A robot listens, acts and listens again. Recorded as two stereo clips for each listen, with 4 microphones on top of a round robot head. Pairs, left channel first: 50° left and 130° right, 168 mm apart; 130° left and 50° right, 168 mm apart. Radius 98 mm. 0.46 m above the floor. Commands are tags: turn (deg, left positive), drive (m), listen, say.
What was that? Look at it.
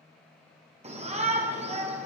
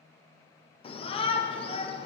<turn deg="-175"/>
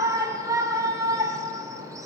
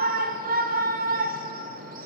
<turn deg="-65"/>
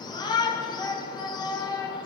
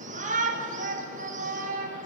<turn deg="-15"/>
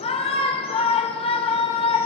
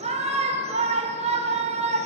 <say>Facing the shout, 1 to 2 m away.</say>